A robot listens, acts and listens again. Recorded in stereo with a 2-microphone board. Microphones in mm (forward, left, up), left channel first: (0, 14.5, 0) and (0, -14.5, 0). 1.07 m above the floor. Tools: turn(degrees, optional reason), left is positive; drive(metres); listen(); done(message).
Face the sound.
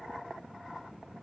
listen()
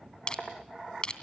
turn(degrees=30, reason="The crushing: about 30° left or 150° left.")
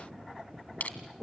turn(degrees=115, reason="So it is at 115° left.")
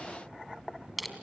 done("Facing the crushing.")